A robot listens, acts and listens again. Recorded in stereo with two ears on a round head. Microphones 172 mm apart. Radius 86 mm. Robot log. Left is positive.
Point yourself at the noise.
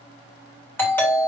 cmd yaw +30
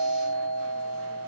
note: So it is at 140° left.
cmd yaw +140
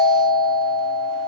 note: The doorbell is now 20° left.
cmd yaw +20
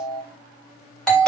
end: Found it: a doorbell, straight ahead.